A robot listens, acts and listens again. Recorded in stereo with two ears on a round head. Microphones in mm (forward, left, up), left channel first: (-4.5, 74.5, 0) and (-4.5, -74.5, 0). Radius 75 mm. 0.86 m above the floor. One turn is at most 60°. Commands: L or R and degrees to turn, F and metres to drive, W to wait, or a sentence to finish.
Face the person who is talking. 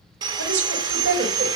R60
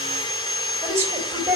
R15
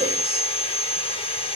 W
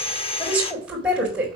R10
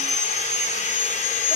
W
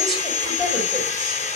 Facing the woman speaking.